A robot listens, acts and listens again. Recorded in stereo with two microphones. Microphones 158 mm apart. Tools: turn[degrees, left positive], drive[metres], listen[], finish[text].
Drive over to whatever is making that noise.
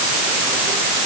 Action: listen[]
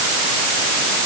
Action: listen[]
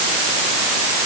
Action: finish[I can't make out anything to turn to.]